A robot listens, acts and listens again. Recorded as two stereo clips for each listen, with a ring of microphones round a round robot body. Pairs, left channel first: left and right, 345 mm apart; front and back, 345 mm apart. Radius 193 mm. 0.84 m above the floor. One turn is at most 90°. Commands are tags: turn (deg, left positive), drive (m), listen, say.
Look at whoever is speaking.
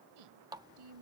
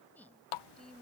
<turn deg="-90"/>
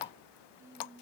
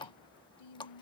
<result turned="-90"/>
<turn deg="-10"/>
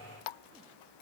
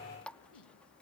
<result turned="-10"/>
<listen/>
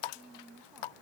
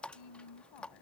<say>Facing the woman speaking.</say>